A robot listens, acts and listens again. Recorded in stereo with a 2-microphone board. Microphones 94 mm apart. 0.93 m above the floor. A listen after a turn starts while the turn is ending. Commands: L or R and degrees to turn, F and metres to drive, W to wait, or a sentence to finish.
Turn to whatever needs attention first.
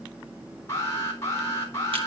L30
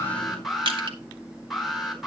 Found it: an alarm, straight ahead, 2 to 4 m away.